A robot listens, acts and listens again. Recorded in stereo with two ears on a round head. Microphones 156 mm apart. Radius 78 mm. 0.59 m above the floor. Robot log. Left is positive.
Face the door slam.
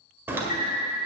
cmd yaw -30
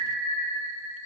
cmd idle
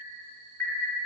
end: I heard a door slam, but can't make it out now. It was about 15° left or 135° right.